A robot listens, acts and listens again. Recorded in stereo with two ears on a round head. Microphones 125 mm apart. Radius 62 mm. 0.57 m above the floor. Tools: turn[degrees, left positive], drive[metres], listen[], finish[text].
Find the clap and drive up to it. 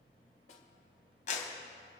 Thought: The clap: about 55° left or 125° left.
Action: turn[55]
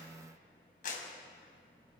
Thought: So it is at 70° left.
Action: turn[70]
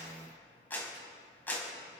Thought: The clap is now 15° left.
Action: turn[15]
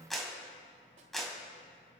Action: drive[1.0]
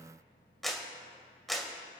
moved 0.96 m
Action: drive[1.0]
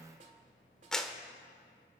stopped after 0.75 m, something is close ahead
Action: finish[Arrived at the clap, straight ahead.]